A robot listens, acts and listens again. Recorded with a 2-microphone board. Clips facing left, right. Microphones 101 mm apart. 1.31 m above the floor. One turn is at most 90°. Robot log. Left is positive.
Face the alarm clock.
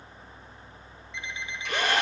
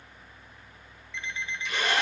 cmd yaw +30
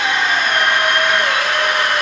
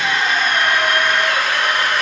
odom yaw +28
cmd idle
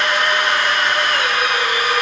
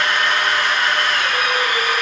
cmd idle
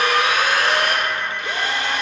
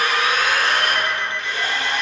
end: I heard an alarm clock, but can't make it out now. It was about 15° right or 140° left.